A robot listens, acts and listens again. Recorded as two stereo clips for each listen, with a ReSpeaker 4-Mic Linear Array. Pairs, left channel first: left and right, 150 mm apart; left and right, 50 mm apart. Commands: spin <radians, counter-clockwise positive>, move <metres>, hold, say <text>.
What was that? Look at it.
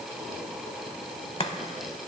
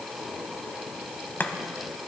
spin 0.70
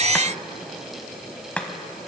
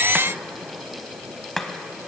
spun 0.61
spin 0.17
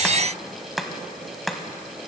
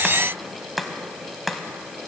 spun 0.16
say Found it: chopping, straight ahead, 1 to 2 m away.